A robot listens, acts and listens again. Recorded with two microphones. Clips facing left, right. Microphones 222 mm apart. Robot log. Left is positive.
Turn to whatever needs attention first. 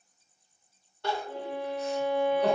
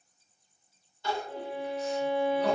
note: The crying: about 65° left or 115° left.
cmd yaw +65
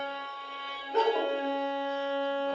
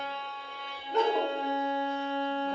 end: Facing the crying.